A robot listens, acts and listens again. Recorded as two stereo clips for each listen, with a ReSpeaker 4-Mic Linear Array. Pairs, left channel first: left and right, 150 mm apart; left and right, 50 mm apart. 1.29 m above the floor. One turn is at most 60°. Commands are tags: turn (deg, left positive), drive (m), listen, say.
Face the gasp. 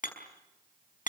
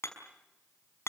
<listen/>
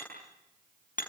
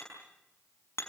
<listen/>
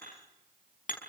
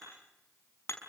<say>I can't make out a gasp, only hammering.</say>